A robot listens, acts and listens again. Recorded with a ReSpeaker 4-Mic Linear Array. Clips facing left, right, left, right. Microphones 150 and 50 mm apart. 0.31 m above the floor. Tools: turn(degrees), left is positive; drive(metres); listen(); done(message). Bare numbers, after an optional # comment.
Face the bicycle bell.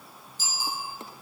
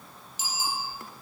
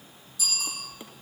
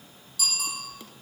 turn(-90)
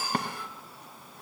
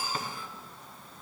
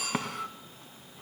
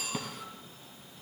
done("Found it: a bicycle bell, straight ahead.")